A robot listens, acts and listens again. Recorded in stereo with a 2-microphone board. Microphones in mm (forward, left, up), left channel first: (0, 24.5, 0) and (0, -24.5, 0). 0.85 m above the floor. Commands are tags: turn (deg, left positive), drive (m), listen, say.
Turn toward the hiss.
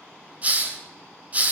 <turn deg="-30"/>
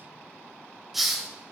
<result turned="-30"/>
<say>Facing the hiss, 1 to 2 m away.</say>